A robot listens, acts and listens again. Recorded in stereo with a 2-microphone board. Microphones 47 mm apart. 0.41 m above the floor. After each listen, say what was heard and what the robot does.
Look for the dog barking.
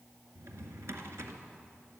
Keep listening.
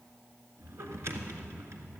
Keep listening.
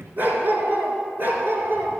The dog barking: about 50° right or 130° right. Turn 50° right.
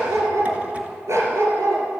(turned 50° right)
So it is at 75° right. Turn 75° right.
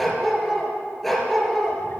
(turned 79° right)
Found it: a dog barking, straight ahead.